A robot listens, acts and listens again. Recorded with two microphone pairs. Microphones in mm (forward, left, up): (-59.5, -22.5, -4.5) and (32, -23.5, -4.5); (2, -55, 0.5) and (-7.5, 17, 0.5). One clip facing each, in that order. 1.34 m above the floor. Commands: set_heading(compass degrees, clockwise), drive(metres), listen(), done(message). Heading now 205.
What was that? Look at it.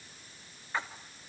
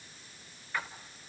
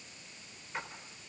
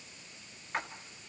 set_heading(90)
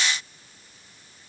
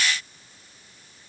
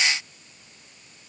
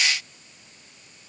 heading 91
done("I heard a splash from this way, but can't make it out now.")